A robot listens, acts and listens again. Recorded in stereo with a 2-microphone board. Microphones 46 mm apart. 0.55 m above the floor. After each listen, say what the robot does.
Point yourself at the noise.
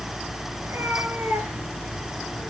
Turn 65° right.
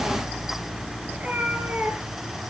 Turn 35° right.
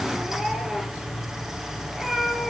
Found it: a cat meowing, straight ahead, 2 to 4 m away.